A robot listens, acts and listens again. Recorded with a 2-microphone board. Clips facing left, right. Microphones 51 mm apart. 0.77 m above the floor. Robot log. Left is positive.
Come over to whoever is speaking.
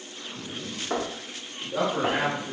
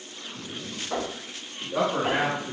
note: The man speaking: about 35° right or 145° right.
cmd yaw -35
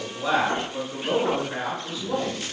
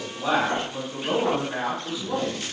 cmd fwd 1.0
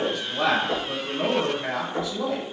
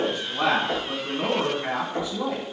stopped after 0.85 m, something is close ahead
end: Arrived at the man speaking, straight ahead.